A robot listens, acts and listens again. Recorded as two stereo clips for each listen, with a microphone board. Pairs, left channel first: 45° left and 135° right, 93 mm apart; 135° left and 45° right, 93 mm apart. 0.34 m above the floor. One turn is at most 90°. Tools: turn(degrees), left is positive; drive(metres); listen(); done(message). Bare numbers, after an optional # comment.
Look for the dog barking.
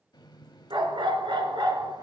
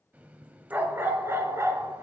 # The dog barking: 100° right.
turn(-90)
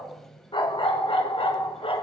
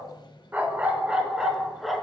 # The dog barking is now 45° left.
turn(45)
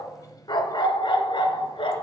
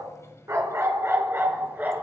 # The dog barking is now 25° left.
turn(25)
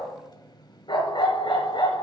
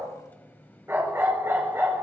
# The dog barking is now 20° left.
turn(20)
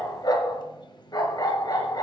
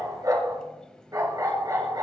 done("Facing the dog barking.")